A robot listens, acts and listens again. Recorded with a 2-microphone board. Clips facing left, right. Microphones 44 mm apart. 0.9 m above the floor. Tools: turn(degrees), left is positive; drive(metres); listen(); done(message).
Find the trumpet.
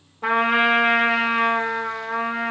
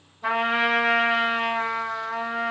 turn(degrees=60)
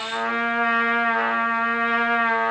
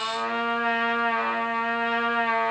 turn(degrees=60)
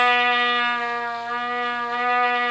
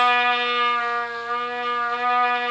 done("Found it: a trumpet, straight ahead.")